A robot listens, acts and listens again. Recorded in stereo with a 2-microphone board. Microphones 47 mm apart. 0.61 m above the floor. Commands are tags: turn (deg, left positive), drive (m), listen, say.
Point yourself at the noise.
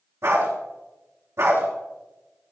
<turn deg="-90"/>
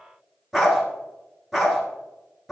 <say>Facing the dog barking.</say>